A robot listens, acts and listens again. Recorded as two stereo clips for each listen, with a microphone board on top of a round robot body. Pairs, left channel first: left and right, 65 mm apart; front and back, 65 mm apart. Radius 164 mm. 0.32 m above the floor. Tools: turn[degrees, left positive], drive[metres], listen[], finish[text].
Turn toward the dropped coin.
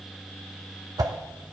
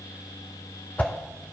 Action: listen[]
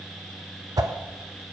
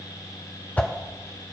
Action: listen[]
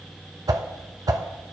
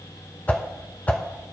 Action: finish[I can't make out a dropped coin, only a whoosh.]